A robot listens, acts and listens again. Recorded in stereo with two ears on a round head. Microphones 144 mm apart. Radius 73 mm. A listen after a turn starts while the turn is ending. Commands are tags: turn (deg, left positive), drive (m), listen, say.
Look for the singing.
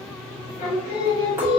<turn deg="30"/>
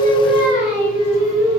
<turn deg="-15"/>
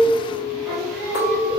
<say>Facing the singing, 1 to 2 m away.</say>